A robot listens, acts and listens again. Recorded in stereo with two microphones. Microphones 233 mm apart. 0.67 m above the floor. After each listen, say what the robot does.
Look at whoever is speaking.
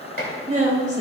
Turn 30° right.
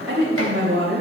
Turn 115° right.
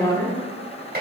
Turn 15° left.
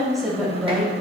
Facing the woman speaking, 2 to 4 m away.